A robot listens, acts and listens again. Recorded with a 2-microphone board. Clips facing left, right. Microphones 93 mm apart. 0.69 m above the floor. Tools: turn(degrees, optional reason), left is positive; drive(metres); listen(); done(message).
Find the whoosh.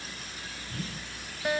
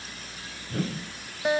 turn(degrees=-70, reason="The whoosh: about 70° right or 110° right.")
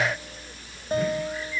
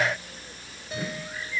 listen()
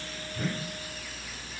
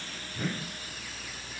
done("Found it: a whoosh, straight ahead.")